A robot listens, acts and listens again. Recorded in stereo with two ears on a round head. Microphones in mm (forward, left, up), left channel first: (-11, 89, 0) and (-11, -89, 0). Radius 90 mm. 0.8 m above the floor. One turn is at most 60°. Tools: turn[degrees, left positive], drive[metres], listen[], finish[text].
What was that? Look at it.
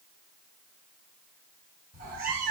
Thought: The cat meowing: about 45° right or 135° right.
Action: turn[-45]
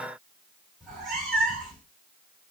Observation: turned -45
Action: finish[Found it: a cat meowing, straight ahead, 1 to 2 m away.]